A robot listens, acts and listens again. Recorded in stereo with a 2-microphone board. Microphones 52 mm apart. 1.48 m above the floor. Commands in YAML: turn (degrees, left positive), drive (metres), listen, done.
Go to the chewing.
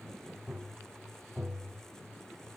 listen: true
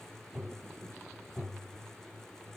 listen: true
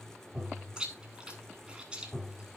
turn: -15
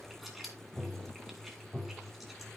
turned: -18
drive: 1.0
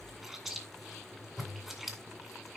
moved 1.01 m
drive: 1.0
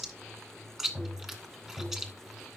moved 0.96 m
drive: 1.0
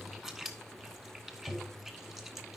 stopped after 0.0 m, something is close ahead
done: "Arrived at the chewing, straight ahead."